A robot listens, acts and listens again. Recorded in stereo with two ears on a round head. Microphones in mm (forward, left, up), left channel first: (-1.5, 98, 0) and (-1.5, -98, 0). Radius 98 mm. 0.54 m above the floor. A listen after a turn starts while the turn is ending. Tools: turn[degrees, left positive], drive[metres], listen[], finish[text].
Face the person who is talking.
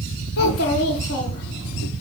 Thought: The child speaking: about 50° left or 130° left.
Action: turn[50]
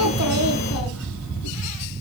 Action: listen[]
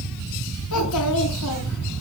Action: listen[]
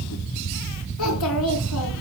Action: finish[I heard a child speaking, but can't make it out now. It was about straight ahead or 80° left.]